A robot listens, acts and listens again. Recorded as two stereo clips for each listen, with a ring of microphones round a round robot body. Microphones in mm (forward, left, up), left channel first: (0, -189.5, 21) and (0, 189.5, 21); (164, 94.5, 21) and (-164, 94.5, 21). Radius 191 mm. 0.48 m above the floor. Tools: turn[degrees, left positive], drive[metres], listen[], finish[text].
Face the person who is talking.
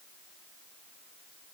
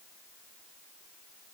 Action: listen[]
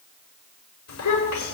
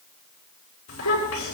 Thought: The child speaking: 45° right.
Action: turn[-45]
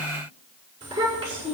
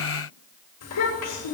Thought: The child speaking is now 15° left.
Action: turn[15]
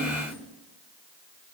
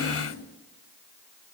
Action: listen[]
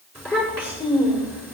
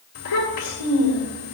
Action: finish[Facing the child speaking.]